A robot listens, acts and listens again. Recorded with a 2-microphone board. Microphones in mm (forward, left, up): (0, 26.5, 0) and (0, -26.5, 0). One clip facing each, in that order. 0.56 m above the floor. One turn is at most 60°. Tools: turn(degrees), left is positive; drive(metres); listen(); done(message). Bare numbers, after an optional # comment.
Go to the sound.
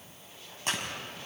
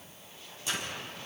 # The tearing paper: about 55° left or 125° left.
turn(55)
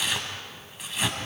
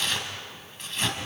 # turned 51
drive(1.0)
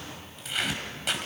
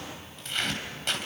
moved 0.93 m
drive(1.0)
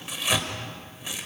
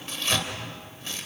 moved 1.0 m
# The tearing paper is now 15° left.
turn(15)
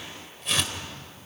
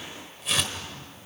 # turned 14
drive(1.0)
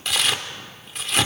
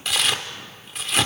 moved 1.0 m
drive(1.0)
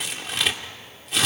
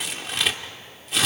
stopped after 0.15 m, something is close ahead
done("Arrived at the tearing paper, straight ahead.")